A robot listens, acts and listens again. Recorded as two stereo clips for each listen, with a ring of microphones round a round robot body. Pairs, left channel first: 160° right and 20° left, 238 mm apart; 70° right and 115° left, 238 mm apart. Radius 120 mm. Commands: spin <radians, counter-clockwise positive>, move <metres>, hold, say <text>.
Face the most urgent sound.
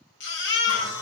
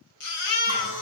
spin -1.92
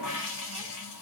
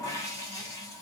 hold
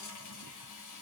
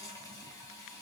hold
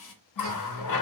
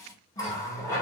say Facing where the baby crying came from. I can't hear it now.